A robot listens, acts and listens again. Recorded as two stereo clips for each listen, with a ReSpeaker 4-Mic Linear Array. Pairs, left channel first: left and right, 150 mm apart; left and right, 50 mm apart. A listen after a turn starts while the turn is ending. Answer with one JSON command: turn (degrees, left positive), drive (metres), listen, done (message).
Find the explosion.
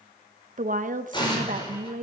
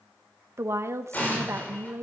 {"turn": 30}
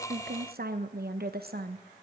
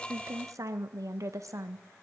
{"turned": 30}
{"listen": true}
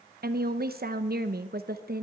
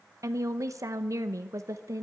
{"done": "I heard an explosion, but can't make it out now. It was about straight ahead or 120° left."}